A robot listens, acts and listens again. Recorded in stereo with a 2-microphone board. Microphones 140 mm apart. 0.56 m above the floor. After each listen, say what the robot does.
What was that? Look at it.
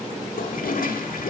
Turn 90° left.
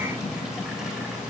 Keep listening.
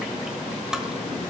Facing the toilet flushing.